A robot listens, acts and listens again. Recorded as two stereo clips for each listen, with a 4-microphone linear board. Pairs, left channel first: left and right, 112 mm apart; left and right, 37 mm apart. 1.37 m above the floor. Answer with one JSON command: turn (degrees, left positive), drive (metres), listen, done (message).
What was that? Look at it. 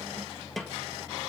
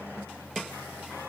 {"turn": 30}
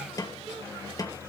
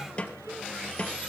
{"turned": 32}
{"turn": 145}
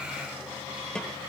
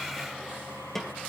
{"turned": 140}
{"turn": 10}
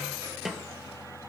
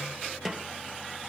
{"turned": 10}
{"done": "Facing the snare drum, 2 to 4 m away."}